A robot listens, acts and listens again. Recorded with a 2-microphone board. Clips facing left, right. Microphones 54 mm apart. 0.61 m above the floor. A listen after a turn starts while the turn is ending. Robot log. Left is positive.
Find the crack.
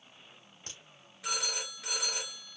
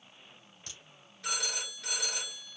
note: The crack: about 40° left or 140° left.
cmd yaw +40
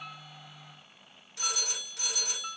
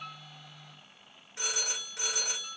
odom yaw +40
cmd idle
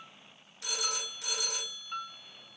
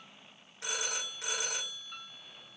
end: I heard a crack, but can't make it out now. It was about straight ahead or 100° left.